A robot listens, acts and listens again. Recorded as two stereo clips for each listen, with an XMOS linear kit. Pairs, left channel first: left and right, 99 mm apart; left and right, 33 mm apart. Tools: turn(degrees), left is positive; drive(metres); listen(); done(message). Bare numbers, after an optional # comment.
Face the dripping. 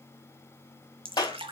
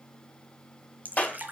# The dripping: about 60° right or 120° right.
turn(-60)
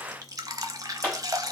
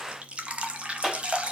# So it is at 40° right.
turn(-40)
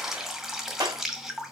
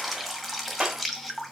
done("Facing the dripping, 1 to 2 m away.")